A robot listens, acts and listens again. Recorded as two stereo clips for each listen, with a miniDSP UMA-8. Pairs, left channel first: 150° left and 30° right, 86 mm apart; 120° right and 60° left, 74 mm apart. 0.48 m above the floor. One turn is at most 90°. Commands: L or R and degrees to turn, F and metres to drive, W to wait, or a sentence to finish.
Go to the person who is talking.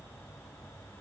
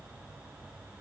W
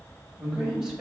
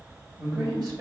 L50
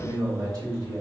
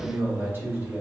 F1.0
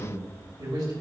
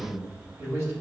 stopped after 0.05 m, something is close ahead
Blocked. The man speaking is further on, straight ahead.